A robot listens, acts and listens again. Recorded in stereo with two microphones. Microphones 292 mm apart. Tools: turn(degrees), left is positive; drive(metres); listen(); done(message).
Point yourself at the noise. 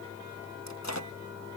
turn(degrees=65)
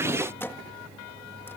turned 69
turn(degrees=10)
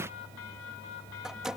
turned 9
done("Facing the microwave.")